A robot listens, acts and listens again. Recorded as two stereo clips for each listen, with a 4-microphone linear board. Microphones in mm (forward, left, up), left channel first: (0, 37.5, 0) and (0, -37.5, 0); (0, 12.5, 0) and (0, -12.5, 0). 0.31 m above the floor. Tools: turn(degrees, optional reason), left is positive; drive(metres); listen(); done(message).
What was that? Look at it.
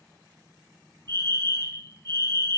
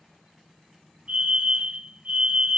turn(degrees=-60, reason="The fire alarm: about 60° right or 120° right.")
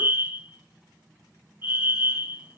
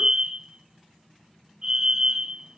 turn(degrees=-35, reason="So it is at 35° right.")
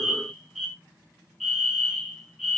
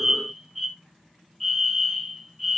done("Found it: a fire alarm, straight ahead, over 4 m away.")